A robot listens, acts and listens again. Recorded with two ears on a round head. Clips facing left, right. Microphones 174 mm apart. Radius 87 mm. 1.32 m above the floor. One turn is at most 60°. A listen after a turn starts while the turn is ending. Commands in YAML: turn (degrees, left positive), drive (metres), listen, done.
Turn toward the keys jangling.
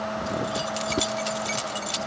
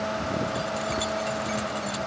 turn: 55
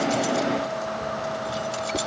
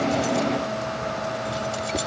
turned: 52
done: "Found it: keys jangling, straight ahead."